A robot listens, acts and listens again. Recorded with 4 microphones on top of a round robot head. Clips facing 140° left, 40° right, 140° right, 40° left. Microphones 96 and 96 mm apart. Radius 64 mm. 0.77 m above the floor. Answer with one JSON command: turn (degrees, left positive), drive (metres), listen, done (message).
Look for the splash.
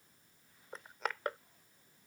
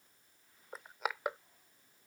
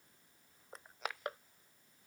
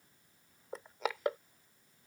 {"listen": true}
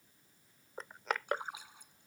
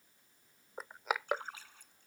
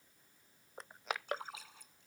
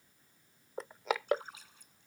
{"turn": -145}
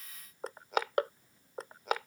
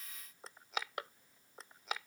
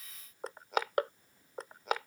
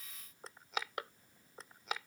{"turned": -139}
{"turn": -10}
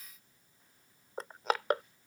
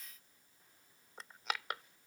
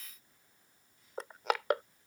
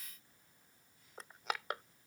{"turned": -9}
{"done": "I heard a splash from this way, but can't make it out now."}